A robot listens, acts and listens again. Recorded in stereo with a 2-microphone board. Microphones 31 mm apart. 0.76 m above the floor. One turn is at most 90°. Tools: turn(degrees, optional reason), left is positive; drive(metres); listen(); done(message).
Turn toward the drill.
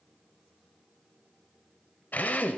turn(degrees=65, reason="The drill: about 65° left or 115° left.")
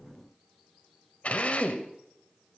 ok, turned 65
turn(degrees=45, reason="So it is at 45° left.")
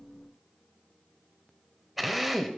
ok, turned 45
done("Facing the drill.")